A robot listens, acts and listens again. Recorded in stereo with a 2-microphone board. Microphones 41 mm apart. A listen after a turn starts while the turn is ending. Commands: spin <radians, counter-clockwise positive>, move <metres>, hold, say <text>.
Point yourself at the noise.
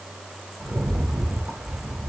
spin -1.05
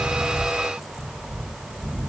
spin -0.70
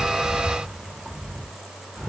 say Found it: a rattle, straight ahead.